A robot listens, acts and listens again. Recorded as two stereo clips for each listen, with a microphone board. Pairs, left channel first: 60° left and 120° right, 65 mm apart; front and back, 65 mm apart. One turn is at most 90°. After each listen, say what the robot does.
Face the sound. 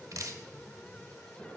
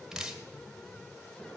Turn 90° right.
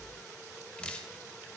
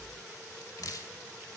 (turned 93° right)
Turn 10° right.
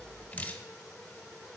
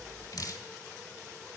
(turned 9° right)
Found it: dripping, straight ahead, 1 to 2 m away.